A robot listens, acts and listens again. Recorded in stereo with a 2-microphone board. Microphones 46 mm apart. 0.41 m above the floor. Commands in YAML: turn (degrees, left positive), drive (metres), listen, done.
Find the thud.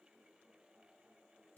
listen: true
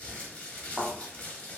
turn: -30
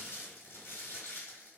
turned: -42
listen: true
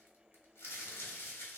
done: "I heard a thud, but can't make it out now. It was about 30° left or 130° right."